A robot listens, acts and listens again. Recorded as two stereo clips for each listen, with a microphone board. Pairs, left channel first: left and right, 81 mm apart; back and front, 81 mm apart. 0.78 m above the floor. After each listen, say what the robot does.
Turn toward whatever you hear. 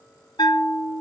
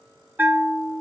Turn 65° left.
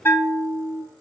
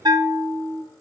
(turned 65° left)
Turn 25° left.
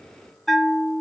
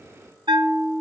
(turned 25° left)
Facing the bell, under 1 m away.